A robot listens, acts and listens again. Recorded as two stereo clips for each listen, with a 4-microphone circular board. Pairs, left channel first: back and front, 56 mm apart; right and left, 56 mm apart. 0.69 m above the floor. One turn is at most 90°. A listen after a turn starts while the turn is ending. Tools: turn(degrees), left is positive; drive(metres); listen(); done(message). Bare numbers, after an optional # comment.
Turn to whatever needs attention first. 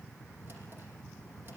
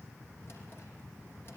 listen()
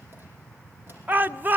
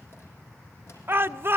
# The shout: 50° left.
turn(50)
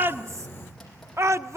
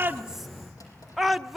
done("Found it: a shout, straight ahead, under 1 m away.")